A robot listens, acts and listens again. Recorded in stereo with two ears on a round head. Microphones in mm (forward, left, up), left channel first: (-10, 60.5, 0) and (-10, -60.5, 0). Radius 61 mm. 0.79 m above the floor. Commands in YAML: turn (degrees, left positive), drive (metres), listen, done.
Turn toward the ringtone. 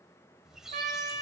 listen: true
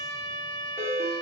turn: -15
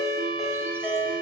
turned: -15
done: "Found it: a ringtone, straight ahead."